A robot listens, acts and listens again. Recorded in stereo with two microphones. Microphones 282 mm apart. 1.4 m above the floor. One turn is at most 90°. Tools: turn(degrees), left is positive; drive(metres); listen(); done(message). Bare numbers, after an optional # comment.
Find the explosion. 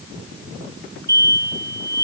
turn(-90)
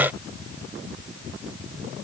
done("Facing where the explosion came from. I can't hear it now.")